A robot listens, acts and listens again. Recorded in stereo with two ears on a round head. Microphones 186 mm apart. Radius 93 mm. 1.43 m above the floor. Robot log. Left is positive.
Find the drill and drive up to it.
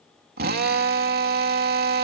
note: The drill: about 50° right or 130° right.
cmd yaw -50
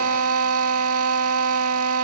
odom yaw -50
note: So it is at 80° right.
cmd yaw -80
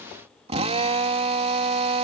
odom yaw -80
note: The drill is now 30° right.
cmd yaw -30
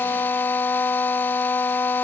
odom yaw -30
note: The drill is now 10° left.
cmd yaw +10
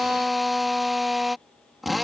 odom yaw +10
cmd fwd 1.0
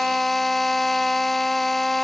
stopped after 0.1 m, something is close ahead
end: Blocked. The drill is further on, straight ahead.